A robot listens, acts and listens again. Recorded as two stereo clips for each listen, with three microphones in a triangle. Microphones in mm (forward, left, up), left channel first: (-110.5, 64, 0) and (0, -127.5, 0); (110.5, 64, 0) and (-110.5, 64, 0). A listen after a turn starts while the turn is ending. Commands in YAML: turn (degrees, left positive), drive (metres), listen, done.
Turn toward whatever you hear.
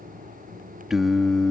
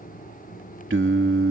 turn: -155
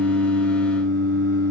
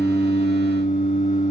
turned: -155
turn: -65
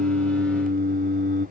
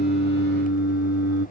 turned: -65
turn: -15
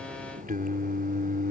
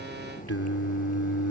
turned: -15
turn: -10
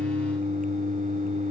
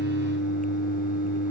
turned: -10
done: "Found it: singing, straight ahead."